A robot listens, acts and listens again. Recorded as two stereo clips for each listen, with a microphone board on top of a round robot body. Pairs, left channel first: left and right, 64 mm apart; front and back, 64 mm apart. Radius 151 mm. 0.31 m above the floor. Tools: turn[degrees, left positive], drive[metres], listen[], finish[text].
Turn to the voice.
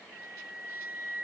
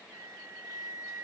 Action: listen[]
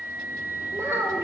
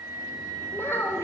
Thought: The child speaking: 45° right.
Action: turn[-45]
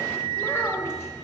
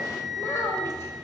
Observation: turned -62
Thought: The child speaking is now 40° left.
Action: turn[40]
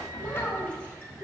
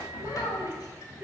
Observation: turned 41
Action: listen[]
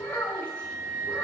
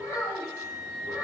Thought: The child speaking is now 25° left.
Action: turn[25]
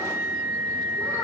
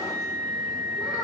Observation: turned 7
Thought: Nothing new. It was at 20° left.
Action: turn[20]
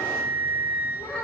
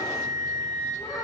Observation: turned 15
Action: listen[]
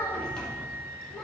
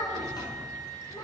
Action: finish[Facing where the child speaking came from. I can't hear it now.]